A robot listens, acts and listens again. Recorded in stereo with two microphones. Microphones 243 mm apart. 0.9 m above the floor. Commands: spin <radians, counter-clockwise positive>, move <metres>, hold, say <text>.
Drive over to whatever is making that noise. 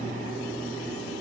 hold
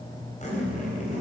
spin 0.52
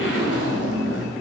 spin 2.09
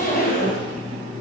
spin 0.70
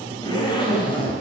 spin 0.35
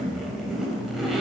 move 1.0
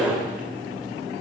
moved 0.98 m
move 1.0
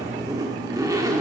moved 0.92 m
spin -0.26
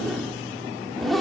move 1.0
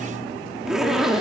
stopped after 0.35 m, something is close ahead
say Arrived at the zipper, straight ahead.